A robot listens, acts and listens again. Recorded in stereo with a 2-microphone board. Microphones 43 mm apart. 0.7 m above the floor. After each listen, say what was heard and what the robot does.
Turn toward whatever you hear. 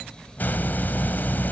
The hiss: about 45° left or 135° left. Turn 45° left.
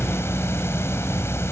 So it is at 90° left. Turn 90° left.
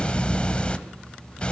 The hiss is now 25° left. Turn 25° left.
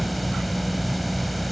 Facing the hiss.